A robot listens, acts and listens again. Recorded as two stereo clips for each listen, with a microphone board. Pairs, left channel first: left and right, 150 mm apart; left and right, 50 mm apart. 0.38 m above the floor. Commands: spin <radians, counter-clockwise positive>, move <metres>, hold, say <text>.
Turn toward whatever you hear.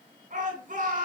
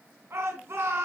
spin -1.13
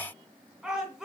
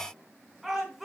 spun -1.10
say Facing the shout.